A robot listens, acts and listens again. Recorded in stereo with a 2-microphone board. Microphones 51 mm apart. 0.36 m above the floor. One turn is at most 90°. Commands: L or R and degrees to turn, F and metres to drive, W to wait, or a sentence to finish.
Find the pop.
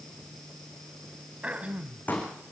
L35
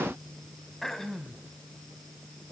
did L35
W
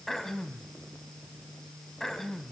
I heard a pop, but can't make it out now. It was about straight ahead or 110° left.